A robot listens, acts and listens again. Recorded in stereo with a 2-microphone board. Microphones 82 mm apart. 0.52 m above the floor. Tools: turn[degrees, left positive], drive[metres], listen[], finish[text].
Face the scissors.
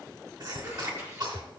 Thought: The scissors: about 30° right or 150° right.
Action: turn[-30]
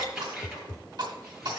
Action: finish[Found it: scissors, straight ahead, 2 to 4 m away.]